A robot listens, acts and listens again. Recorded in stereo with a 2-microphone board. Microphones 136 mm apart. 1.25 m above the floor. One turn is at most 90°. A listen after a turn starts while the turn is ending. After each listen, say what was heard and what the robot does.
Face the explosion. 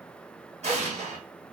The explosion: about 55° right or 125° right. Turn 55° right.
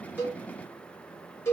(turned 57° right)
Keep listening.
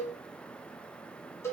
I heard an explosion, but can't make it out now. It was about 5° left or 70° right.